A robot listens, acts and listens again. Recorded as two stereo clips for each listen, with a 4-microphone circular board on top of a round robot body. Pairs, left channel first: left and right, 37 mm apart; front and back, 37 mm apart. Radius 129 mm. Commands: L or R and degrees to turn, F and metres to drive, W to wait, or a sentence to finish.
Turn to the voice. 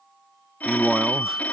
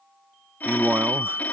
R165
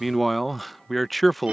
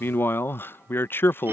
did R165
Facing the man speaking.